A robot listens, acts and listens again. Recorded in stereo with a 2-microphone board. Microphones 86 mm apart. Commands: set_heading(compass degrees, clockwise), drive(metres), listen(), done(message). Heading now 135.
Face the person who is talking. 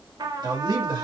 set_heading(195)
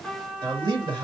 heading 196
set_heading(251)
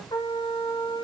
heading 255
listen()
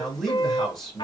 done("Facing the man speaking.")